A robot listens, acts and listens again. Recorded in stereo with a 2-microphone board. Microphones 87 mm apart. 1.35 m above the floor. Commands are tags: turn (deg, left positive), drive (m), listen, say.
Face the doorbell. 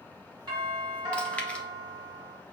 <turn deg="-50"/>
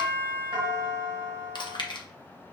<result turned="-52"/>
<turn deg="-75"/>
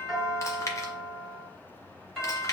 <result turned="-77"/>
<say>Found it: a doorbell, straight ahead, 2 to 4 m away.</say>